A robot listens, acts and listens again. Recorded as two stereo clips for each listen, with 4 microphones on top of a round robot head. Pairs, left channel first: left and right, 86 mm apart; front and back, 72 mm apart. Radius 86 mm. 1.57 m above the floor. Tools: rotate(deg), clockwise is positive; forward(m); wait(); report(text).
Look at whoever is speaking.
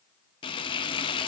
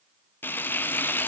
wait()
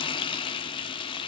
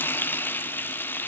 wait()
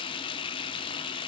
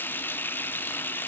report("I can't make out anyone speaking to turn to.")